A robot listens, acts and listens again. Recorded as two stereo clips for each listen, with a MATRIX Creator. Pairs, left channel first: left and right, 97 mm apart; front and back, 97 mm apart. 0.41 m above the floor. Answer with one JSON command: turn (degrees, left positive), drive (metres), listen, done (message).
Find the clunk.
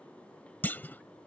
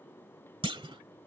{"turn": 160}
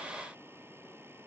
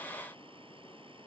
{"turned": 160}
{"done": "Facing where the clunk came from. I can't hear it now."}